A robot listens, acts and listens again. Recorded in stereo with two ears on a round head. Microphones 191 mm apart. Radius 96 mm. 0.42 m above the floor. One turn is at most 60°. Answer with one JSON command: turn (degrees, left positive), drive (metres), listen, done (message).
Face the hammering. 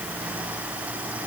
{"listen": true}
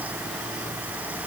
{"listen": true}
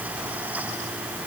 {"done": "I can't make out hammering to turn to."}